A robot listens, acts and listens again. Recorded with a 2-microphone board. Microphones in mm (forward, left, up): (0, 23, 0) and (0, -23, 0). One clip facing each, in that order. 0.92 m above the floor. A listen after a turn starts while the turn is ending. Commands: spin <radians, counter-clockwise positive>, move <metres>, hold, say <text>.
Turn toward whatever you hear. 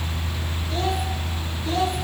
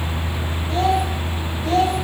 spin -1.05
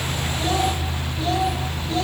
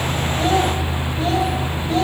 spin -0.70
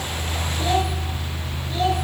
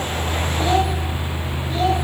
spin 0.17
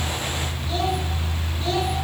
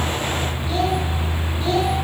say Found it: a child speaking, straight ahead, over 4 m away.